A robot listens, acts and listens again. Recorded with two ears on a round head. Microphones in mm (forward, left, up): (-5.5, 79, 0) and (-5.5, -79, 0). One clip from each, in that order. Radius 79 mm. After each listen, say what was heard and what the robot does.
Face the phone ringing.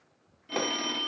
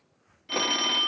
The phone ringing: about 35° right or 145° right. Turn 35° right.
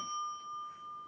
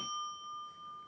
Found it: a phone ringing, straight ahead, 1 to 2 m away.